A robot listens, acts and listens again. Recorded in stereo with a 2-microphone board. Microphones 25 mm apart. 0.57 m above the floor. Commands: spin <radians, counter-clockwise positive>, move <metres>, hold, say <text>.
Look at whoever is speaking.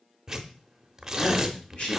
spin 0.79
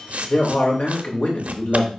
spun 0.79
spin 1.40
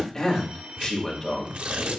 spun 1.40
spin 0.35
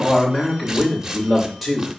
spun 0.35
say Facing the man speaking, 2 to 4 m away.